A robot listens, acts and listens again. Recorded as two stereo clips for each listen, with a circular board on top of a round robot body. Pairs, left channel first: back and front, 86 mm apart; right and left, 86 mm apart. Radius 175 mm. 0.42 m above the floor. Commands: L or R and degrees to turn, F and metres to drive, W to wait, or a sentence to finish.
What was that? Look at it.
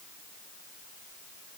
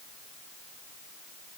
W
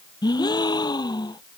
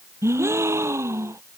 L145
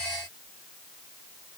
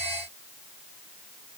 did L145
Facing where the gasp came from. I can't hear it now.